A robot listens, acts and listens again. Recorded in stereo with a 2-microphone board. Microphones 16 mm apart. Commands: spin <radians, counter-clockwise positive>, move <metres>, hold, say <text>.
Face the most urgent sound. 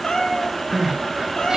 spin -0.70
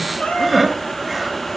say Found it: crying, straight ahead, 2 to 4 m away.